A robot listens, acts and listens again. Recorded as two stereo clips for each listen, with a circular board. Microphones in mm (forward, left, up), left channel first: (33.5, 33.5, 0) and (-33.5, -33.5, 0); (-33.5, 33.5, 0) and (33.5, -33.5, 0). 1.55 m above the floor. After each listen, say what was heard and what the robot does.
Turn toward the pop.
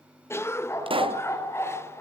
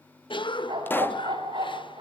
The pop: 155° right. Turn 155° right.
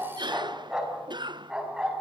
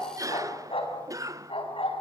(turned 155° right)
I heard a pop from this way, but can't make it out now.